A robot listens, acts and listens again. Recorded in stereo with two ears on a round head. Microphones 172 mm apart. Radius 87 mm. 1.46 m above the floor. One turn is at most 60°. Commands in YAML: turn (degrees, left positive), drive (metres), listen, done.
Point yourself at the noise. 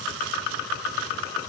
listen: true
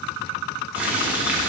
turn: -30
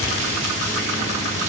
turn: -60
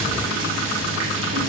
turn: -60
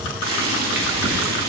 turn: -50
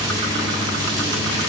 turn: -20
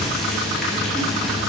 done: "Found it: boiling, straight ahead."